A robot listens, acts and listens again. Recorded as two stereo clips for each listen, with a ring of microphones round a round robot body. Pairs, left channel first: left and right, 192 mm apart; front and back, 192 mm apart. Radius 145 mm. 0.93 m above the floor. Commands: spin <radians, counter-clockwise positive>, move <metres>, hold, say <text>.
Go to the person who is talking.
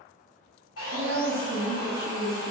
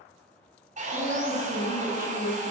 spin -2.18
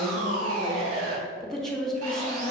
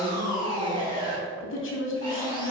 move 1.0
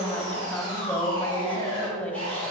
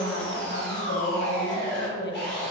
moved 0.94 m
move 1.0
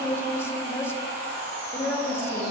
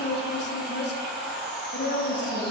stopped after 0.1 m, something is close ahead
spin 0.17
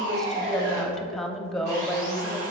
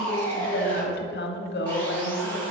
say I am next to the woman speaking.